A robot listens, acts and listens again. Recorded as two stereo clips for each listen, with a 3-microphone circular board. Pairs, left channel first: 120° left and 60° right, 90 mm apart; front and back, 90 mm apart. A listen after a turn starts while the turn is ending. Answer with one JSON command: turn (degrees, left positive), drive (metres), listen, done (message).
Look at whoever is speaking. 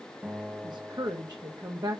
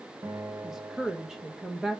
{"turn": -95}
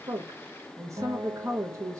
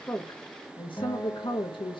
{"done": "Found it: a woman speaking, straight ahead."}